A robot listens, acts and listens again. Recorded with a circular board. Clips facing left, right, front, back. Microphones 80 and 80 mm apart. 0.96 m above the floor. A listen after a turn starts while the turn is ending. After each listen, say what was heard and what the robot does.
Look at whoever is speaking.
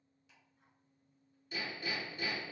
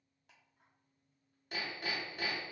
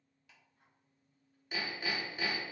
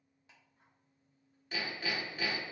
Keep listening.
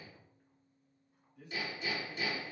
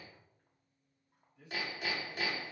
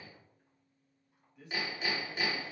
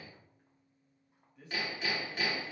The man speaking: 95° left. Turn 95° left.
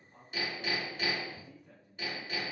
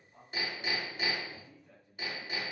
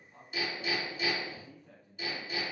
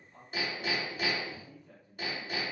The man speaking is now 10° left. Turn 10° left.
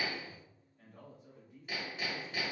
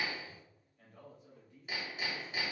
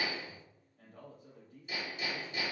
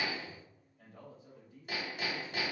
Found it: a man speaking, straight ahead.